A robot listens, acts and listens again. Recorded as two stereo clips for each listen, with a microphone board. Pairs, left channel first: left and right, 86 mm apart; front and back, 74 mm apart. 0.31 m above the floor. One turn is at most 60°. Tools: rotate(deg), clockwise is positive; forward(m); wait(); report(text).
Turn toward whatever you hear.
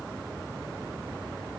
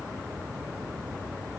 wait()
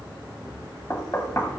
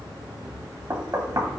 rotate(-60)
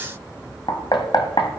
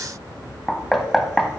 rotate(-60)
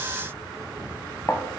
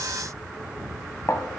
rotate(-40)
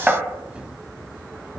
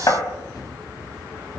rotate(15)
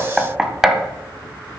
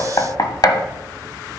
report("Facing the knocking, 1 to 2 m away.")